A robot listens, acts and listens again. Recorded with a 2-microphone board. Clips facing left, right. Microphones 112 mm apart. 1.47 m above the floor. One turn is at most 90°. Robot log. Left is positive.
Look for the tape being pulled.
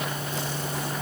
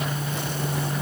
cmd idle
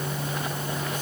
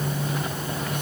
cmd idle
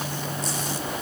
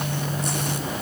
end: I can't make out tape being pulled.